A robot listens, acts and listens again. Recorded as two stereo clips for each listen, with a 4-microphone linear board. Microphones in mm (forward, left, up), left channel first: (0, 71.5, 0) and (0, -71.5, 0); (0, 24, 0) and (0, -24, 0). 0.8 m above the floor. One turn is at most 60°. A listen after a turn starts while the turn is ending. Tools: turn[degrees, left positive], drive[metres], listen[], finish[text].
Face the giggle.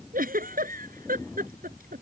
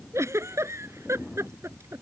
Action: turn[-60]
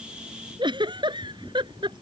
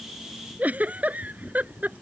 Thought: So it is at 35° right.
Action: turn[-35]
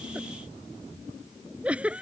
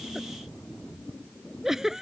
Thought: The giggle is now 10° right.
Action: turn[-10]
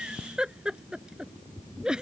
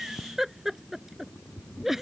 Action: finish[Facing the giggle.]